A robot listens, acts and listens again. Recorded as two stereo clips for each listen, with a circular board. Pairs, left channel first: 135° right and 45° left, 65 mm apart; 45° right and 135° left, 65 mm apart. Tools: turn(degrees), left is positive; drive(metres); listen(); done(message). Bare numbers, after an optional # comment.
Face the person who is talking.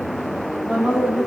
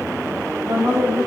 # The woman speaking: 115° left.
turn(115)
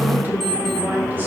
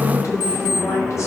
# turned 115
listen()
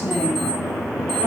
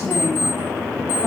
listen()
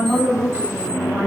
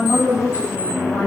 # The woman speaking is now 15° right.
turn(-15)
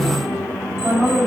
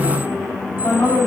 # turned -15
done("Facing the woman speaking, 2 to 4 m away.")